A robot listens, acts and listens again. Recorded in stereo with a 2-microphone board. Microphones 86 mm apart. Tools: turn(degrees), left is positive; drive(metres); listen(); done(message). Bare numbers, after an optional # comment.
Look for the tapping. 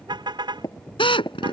# The tapping: about 40° left or 140° left.
turn(40)
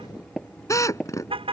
done("Found it: tapping, straight ahead.")